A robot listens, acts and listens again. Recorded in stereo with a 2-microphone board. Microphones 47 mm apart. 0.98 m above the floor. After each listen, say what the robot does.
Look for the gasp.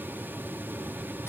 Keep listening.
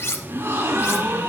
Turn 90° right.
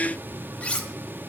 I heard a gasp from this way, but can't make it out now.